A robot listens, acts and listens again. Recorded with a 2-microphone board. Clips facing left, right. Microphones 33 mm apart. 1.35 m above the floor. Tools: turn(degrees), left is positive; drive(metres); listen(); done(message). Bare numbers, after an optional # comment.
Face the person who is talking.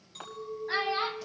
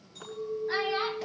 turn(30)
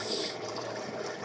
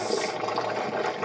listen()
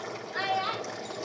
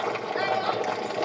# The child speaking: about 20° left or 160° left.
turn(20)
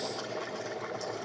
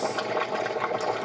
listen()
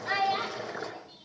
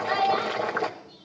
# The child speaking: about 25° left or 155° left.
turn(25)
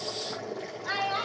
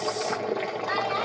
# So it is at 140° left.
turn(140)
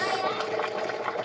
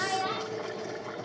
# The child speaking is now 20° right.
turn(-20)
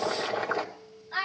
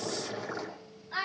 done("Facing the child speaking, over 4 m away.")